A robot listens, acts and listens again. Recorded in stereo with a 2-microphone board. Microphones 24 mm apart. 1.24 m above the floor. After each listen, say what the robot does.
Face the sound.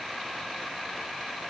Keep listening.
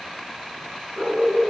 Turn 25° right.
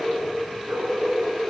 Turn 130° right.
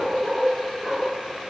Turn 25° right.
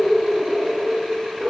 Turn 10° left.
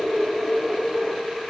Facing the dog barking.